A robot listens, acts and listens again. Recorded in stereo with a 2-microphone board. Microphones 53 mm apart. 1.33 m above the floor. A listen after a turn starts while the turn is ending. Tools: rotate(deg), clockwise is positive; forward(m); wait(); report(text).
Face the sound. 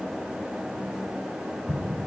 rotate(50)
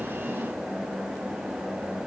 wait()
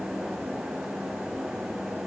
report("I heard an explosion, but can't make it out now. It was about straight ahead or 80° right.")